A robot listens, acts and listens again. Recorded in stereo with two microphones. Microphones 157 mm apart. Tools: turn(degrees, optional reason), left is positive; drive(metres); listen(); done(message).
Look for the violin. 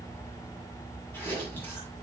listen()
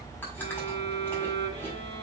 turn(degrees=45, reason="The violin: about 45° left or 135° left.")
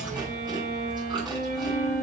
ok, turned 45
turn(degrees=90, reason="So it is at 90° left.")
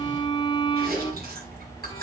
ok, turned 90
turn(degrees=30, reason="The violin is now 30° left.")
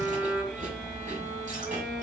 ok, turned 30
done("Found it: a violin, straight ahead.")